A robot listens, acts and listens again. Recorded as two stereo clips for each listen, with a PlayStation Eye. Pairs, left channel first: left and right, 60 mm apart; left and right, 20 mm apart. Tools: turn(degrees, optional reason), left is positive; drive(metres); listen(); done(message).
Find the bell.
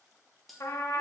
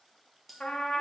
turn(degrees=30)
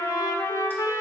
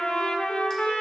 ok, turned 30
listen()
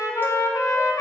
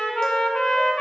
listen()
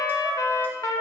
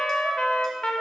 done("I heard a bell, but can't make it out now. It was about 25° right or 145° left.")